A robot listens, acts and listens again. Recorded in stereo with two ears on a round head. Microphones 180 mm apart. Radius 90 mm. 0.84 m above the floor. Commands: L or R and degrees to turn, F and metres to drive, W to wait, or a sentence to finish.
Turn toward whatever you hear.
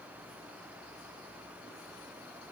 W
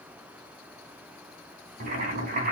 R45
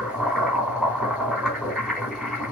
Facing the boiling.